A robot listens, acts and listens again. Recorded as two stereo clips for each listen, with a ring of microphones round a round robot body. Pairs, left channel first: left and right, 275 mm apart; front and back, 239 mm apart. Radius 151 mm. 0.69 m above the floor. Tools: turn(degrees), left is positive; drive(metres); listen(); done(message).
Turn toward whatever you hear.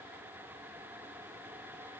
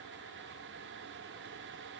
listen()
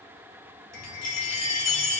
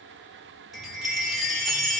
turn(degrees=90)
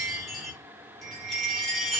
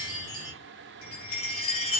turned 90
done("Found it: a chime, straight ahead, 1 to 2 m away.")